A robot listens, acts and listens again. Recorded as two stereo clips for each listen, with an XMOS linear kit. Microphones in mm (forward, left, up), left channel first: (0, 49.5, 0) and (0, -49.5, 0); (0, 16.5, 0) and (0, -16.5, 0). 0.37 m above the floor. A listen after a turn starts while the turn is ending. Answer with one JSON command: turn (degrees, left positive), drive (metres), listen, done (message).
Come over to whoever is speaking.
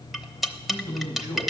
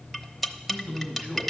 {"turn": -45}
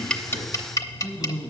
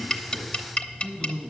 {"drive": 1.0}
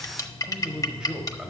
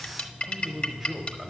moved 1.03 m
{"turn": -10}
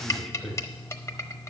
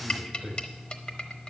{"drive": 1.0}
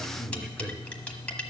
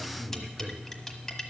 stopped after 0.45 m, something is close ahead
{"done": "I am next to the man speaking."}